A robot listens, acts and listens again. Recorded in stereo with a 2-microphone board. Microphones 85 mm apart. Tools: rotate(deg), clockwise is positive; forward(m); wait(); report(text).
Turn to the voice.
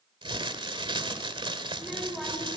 rotate(-30)
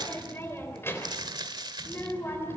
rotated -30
rotate(-150)
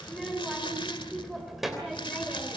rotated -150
report("Found it: a child speaking, straight ahead.")